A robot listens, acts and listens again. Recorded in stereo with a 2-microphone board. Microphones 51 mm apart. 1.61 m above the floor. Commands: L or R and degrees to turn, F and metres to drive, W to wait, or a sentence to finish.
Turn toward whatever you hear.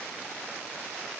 W
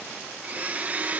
R35
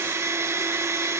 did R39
R110
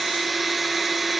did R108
Found it: a blender, straight ahead.